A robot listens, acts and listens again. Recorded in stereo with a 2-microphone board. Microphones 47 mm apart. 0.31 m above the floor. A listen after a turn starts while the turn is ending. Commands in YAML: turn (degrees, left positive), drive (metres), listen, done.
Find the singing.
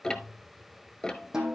listen: true
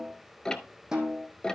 listen: true
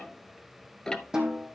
done: "I can't make out singing to turn to."